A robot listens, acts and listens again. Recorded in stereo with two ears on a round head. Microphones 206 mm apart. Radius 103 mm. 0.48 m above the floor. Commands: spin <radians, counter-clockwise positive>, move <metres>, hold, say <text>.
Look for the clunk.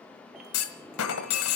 spin 1.22
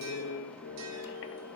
hold
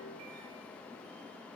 say I heard a clunk, but can't make it out now. It was about straight ahead or 40° left.